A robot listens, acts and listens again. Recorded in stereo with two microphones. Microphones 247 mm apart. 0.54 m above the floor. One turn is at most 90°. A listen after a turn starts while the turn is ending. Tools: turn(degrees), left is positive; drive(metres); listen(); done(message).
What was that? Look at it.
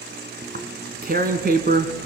turn(degrees=-40)
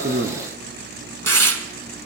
turn(degrees=-90)
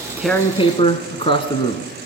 turn(degrees=20)
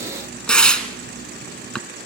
done("Facing the tearing paper, 1 to 2 m away.")